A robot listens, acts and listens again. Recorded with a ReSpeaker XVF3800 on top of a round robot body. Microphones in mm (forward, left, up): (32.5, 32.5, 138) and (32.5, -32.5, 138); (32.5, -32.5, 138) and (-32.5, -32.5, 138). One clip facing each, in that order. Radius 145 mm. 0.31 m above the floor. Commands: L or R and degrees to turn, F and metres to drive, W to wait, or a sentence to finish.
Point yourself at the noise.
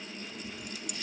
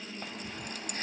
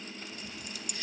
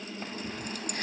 R140
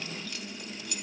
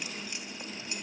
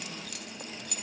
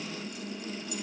R25
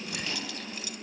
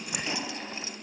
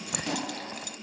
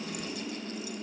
R25
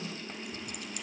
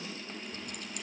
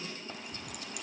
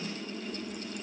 W
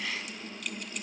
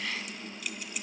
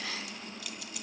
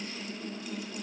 Found it: keys jangling, straight ahead, 2 to 4 m away.